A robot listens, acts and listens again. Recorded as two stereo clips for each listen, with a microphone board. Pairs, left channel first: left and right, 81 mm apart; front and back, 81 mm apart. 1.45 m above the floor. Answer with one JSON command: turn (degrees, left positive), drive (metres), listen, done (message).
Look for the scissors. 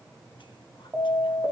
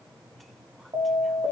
{"listen": true}
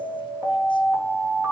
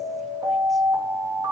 {"listen": true}
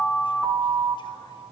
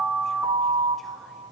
{"done": "I can't make out scissors, only an alarm."}